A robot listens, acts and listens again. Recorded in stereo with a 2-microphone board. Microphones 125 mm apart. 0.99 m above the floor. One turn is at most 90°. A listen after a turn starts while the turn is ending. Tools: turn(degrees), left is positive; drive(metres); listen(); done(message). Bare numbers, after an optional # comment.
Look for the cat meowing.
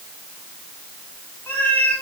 turn(30)
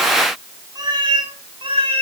# So it is at 50° right.
turn(-50)
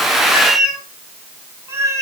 # The cat meowing is now 25° right.
turn(-25)
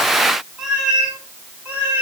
# The cat meowing is now 10° right.
turn(-10)
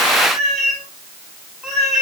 done("Found it: a cat meowing, straight ahead.")